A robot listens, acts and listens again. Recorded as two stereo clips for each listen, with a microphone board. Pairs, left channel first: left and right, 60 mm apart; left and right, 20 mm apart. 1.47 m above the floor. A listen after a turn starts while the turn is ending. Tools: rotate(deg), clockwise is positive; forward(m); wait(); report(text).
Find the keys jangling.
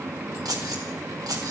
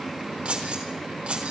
rotate(90)
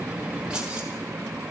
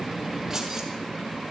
wait()
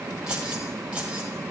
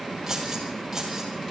rotate(15)
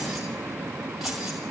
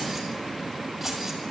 report("Facing the keys jangling.")